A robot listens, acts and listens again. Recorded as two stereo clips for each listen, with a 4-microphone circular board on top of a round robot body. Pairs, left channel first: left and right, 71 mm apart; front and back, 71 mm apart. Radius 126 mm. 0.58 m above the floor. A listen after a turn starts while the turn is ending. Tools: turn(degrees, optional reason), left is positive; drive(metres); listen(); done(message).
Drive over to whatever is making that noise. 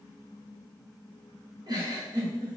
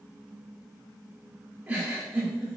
turn(degrees=-115, reason="The giggle: 115° right.")
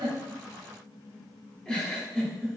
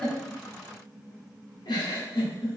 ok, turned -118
drive(metres=1.0)
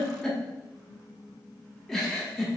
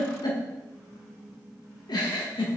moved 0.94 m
drive(metres=1.0)
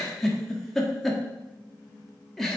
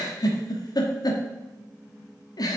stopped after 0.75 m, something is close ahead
done("Arrived at the giggle, straight ahead.")